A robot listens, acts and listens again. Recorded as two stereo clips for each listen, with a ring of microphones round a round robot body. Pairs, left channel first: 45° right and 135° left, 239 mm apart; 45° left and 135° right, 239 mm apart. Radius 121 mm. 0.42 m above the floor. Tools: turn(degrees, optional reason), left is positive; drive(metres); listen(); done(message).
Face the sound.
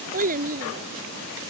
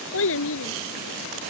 turn(degrees=80, reason="The child speaking: 80° left.")
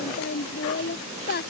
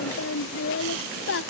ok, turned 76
done("Found it: a child speaking, straight ahead.")